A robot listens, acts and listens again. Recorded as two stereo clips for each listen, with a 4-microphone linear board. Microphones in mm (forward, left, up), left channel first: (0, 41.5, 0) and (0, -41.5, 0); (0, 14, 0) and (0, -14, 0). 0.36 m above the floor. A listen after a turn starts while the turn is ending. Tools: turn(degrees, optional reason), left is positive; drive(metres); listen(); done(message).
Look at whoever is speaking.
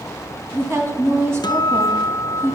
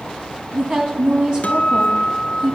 turn(degrees=-35, reason="The woman speaking: about 35° right or 145° right.")
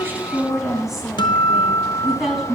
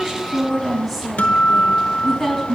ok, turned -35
done("Found it: a woman speaking, straight ahead.")